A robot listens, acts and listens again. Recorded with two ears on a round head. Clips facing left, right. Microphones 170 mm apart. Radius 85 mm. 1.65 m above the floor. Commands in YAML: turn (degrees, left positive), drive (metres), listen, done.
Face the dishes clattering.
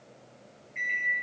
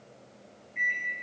listen: true
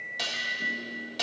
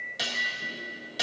turn: -30
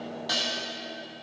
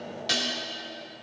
turn: -140
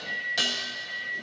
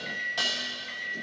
turn: 25
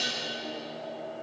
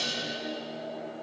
done: "Found it: dishes clattering, straight ahead."